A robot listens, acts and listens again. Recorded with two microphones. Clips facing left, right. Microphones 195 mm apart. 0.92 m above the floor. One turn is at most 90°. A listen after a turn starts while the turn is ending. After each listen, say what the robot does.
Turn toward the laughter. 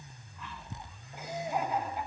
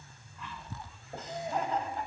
Turn 30° left.
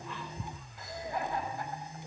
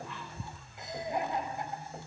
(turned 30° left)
Turn 20° right.
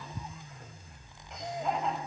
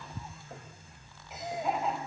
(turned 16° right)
Found it: laughter, straight ahead.